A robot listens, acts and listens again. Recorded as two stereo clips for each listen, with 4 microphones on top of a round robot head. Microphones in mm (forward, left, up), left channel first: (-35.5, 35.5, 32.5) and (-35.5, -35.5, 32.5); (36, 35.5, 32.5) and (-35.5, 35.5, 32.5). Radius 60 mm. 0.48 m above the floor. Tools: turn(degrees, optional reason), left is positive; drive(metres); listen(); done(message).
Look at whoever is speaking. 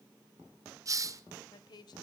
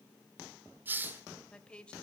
turn(degrees=75, reason="The woman speaking: 75° left.")
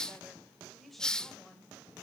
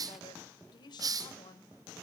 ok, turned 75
done("Found it: a woman speaking, straight ahead.")